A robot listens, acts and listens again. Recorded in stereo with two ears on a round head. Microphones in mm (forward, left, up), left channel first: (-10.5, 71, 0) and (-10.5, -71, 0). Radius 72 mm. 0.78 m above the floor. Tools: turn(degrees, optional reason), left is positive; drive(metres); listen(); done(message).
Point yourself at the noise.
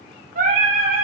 turn(degrees=-50, reason="The singing: about 50° right or 130° right.")
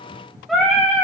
done("Facing the singing, over 4 m away.")